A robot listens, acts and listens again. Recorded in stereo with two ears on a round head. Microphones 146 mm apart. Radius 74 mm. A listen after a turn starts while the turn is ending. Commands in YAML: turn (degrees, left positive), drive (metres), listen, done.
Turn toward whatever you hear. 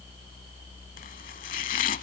turn: 50
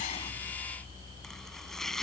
done: "Facing the chopping."